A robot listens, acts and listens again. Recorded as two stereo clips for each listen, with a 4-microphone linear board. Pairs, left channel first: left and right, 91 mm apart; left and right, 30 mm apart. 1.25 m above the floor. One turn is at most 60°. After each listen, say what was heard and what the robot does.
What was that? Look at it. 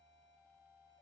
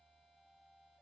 Keep listening.
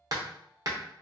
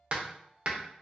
The hammering: about 45° right or 135° right. Turn 45° right.
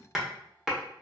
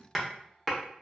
Found it: hammering, straight ahead, under 1 m away.